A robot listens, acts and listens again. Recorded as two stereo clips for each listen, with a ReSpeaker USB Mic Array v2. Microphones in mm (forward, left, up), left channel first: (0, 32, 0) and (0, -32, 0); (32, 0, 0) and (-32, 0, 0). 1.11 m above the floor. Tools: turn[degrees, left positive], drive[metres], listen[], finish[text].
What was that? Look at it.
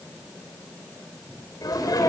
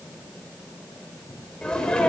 Thought: The sneeze: 75° left.
Action: turn[75]
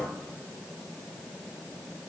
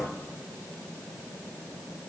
Action: finish[Facing where the sneeze came from. I can't hear it now.]